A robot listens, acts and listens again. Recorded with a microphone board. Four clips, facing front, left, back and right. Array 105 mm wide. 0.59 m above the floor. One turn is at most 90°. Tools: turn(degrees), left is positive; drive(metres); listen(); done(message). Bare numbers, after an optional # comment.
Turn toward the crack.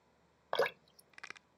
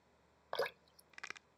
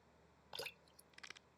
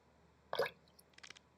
# The crack: 55° left.
turn(55)
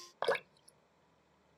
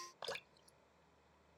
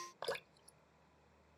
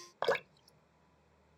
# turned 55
done("I heard a crack from this way, but can't make it out now.")